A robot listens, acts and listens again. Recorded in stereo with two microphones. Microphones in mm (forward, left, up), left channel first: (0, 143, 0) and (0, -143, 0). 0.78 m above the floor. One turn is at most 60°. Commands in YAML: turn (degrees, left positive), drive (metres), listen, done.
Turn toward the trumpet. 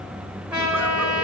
turn: -30
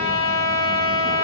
turn: -60
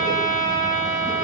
turn: -60
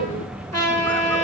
turn: -60
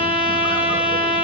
turn: -30
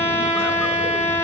turn: 10
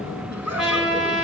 done: "Found it: a trumpet, straight ahead, over 4 m away."